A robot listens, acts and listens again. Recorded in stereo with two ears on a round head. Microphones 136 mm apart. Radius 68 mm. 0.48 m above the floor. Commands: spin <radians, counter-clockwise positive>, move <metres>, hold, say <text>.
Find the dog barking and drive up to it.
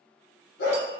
spin 1.57
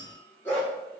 spin 0.26
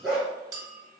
move 1.0
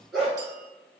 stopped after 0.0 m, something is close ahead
say Something is in my way. I am facing the dog barking but have not reached it.